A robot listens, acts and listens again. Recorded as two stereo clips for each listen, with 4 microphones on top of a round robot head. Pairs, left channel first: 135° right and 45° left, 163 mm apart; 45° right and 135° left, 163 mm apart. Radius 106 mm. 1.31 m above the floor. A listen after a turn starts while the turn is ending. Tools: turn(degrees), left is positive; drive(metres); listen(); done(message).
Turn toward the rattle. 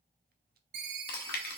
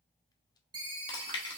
listen()
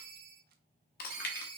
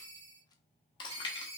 listen()
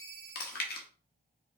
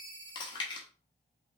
done("I can't make out a rattle, only a ringtone and chewing.")